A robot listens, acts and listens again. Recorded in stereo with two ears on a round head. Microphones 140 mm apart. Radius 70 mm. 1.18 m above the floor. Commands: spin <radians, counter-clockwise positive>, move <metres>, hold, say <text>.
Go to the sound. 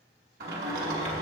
spin -1.13
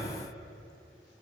move 1.0
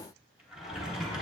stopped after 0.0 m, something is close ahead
say Blocked. The sliding door is further on, straight ahead.